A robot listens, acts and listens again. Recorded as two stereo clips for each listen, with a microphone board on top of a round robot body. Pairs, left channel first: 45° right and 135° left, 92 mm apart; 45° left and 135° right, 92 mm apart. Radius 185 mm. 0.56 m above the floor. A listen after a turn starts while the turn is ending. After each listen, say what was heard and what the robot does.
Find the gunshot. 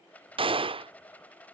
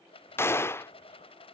The gunshot: 110° left. Turn 110° left.
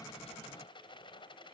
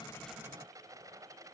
Facing where the gunshot came from. I can't hear it now.